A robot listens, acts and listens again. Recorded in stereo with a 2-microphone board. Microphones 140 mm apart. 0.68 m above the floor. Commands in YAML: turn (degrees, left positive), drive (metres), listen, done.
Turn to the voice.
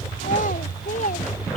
turn: 70
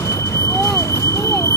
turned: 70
listen: true
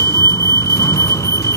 listen: true
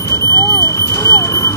done: "I heard a child speaking, but can't make it out now. It was about straight ahead or 40° left."